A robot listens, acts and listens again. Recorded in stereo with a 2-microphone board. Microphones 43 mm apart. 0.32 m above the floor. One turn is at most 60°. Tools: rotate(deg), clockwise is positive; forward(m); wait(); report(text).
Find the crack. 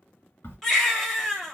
rotate(-60)
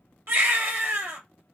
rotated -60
wait()
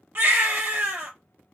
report("I heard a crack, but can't make it out now. It was about 10° left or 50° left.")